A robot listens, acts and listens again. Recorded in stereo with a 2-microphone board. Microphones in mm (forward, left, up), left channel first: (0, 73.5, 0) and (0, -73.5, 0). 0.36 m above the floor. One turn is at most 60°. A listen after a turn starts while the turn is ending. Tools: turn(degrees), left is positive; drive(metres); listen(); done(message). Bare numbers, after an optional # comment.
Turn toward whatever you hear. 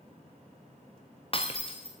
# The breaking glass: about 40° left or 140° left.
turn(40)
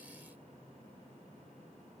listen()
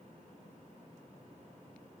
done("I heard breaking glass, but can't make it out now. It was about straight ahead or 100° left.")